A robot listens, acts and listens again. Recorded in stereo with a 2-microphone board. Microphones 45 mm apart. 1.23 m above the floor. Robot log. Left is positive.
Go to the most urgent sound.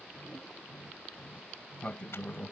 cmd idle
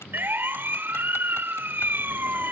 note: The siren: about 55° right or 125° right.
cmd yaw -55
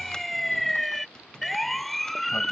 cmd fwd 1.0
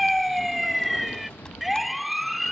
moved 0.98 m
cmd fwd 1.0
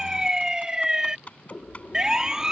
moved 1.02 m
note: The siren is now 15° right.
cmd yaw -15
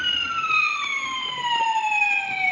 cmd fwd 1.0
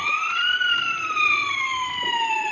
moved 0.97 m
cmd fwd 1.0
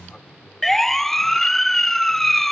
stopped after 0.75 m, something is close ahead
note: The siren is now 10° left.
cmd yaw +10
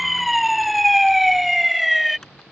end: I am next to the siren.